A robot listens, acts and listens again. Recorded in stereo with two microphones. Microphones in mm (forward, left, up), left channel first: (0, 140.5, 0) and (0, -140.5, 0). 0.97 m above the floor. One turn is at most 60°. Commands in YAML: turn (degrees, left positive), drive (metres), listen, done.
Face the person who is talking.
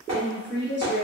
turn: -40
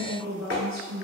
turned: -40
turn: -60
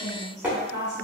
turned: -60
turn: -60
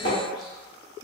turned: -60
done: "Facing the woman speaking, 1 to 2 m away."